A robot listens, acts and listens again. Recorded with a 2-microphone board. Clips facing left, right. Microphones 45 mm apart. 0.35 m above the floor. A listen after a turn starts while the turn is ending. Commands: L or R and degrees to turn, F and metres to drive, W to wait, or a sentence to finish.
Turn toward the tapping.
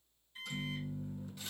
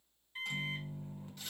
W
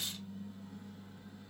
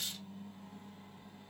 W
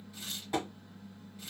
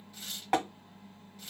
R70
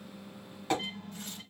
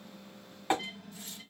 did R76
R25
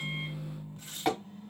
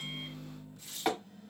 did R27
Found it: tapping, straight ahead.